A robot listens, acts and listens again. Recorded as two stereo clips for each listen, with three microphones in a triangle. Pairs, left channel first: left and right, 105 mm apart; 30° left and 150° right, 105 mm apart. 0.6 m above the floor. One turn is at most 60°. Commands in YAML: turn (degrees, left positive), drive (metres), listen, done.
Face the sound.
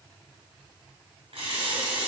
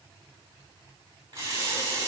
turn: -60
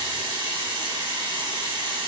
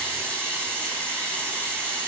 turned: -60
turn: -50
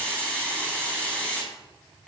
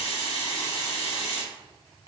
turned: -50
turn: 10
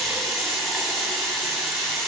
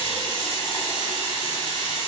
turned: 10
done: "Facing the running tap, 2 to 4 m away."